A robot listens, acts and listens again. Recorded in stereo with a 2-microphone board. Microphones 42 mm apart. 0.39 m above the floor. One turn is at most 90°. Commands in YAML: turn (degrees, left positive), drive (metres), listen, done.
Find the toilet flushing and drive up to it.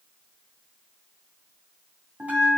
listen: true
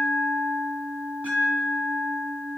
listen: true
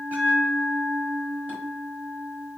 done: "I can't make out a toilet flushing, only a bell."